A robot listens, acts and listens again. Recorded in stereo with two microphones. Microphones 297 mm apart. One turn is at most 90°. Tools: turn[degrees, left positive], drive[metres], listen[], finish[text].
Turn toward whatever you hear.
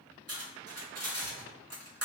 Thought: The cutlery clinking: about 55° right or 125° right.
Action: turn[-55]
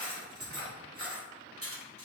Thought: So it is at 60° right.
Action: turn[-60]
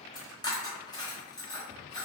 Thought: The cutlery clinking is now 15° left.
Action: turn[15]
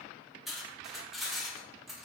Action: finish[Found it: cutlery clinking, straight ahead, under 1 m away.]